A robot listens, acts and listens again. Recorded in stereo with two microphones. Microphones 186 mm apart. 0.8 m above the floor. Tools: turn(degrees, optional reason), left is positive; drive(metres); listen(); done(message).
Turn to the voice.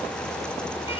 listen()
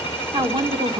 turn(degrees=-25, reason="The woman speaking: about 25° right or 155° right.")
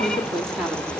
done("Found it: a woman speaking, straight ahead.")